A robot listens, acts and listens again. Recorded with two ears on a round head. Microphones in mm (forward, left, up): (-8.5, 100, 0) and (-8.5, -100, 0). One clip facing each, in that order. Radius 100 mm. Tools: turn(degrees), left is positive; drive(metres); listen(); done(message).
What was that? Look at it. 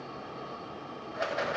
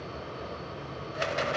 turn(degrees=-40)
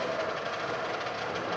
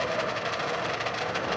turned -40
turn(degrees=-95)
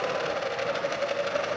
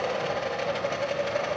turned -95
turn(degrees=20)
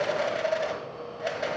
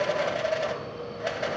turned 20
done("Facing the rattle, 1 to 2 m away.")